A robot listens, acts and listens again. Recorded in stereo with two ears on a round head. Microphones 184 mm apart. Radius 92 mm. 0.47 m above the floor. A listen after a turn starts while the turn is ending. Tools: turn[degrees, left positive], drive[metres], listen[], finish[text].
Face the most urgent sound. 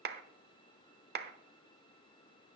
Action: listen[]
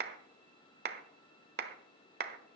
Action: listen[]
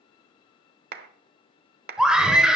Action: turn[-30]
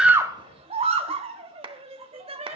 Thought: So it is at 145° right.
Action: turn[-145]
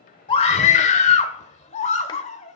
Thought: The scream is now 40° left.
Action: turn[40]
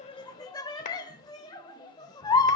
Thought: The scream is now 25° left.
Action: turn[25]
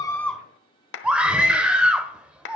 Action: finish[Facing the scream, 1 to 2 m away.]